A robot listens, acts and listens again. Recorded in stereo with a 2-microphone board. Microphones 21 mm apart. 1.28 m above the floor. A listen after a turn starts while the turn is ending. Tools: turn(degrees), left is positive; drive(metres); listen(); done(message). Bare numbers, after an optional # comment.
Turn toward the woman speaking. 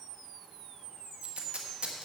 listen()
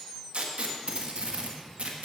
listen()
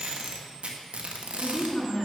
# The woman speaking: about 30° left or 150° left.
turn(30)
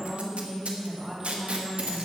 # So it is at 10° right.
turn(-10)
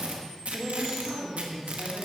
done("Facing the woman speaking, 2 to 4 m away.")